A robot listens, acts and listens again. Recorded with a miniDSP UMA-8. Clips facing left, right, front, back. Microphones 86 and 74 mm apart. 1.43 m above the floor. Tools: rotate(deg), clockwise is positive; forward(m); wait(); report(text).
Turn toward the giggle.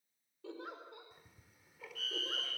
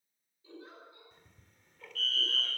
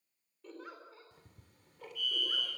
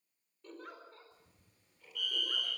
rotate(-85)
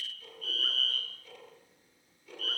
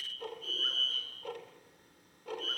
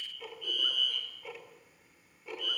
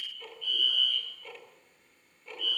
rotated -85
wait()
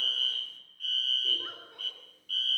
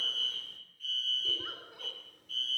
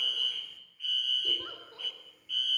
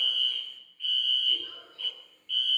wait()
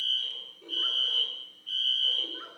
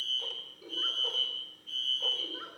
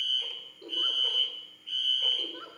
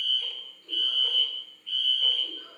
report("Found it: a giggle, straight ahead.")